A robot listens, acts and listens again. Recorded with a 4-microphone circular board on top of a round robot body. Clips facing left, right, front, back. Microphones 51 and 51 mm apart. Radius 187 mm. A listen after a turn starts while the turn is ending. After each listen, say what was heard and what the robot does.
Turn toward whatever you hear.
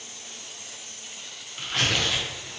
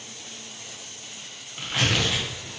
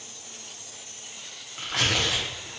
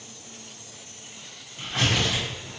Facing the tearing paper, 1 to 2 m away.